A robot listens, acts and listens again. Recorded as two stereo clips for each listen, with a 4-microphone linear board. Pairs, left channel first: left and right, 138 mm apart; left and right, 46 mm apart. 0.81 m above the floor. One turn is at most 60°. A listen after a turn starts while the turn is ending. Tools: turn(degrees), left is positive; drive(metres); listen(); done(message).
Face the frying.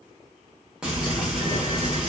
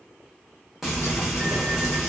turn(degrees=-30)
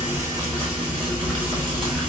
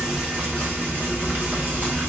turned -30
turn(degrees=-60)
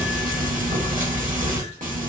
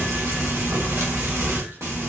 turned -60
turn(degrees=-60)
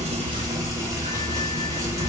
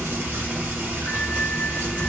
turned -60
turn(degrees=-25)
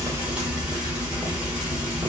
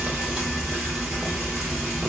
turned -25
turn(degrees=-10)
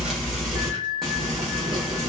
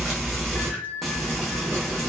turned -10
done("Found it: frying, straight ahead.")